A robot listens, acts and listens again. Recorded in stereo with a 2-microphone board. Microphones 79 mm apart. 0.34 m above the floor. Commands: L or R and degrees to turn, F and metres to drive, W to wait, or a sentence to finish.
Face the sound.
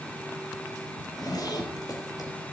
L55
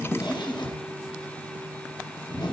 L70
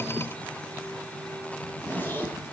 L25
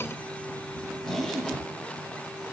Facing the zipper, 2 to 4 m away.